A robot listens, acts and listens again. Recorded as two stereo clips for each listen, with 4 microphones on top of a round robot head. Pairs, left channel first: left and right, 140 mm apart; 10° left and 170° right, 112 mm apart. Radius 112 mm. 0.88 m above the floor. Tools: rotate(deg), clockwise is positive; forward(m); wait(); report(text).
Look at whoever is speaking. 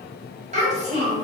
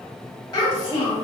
rotate(50)
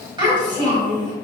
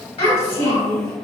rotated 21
rotate(30)
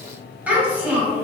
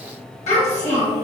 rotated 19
rotate(10)
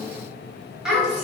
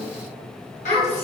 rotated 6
report("Found it: a child speaking, straight ahead.")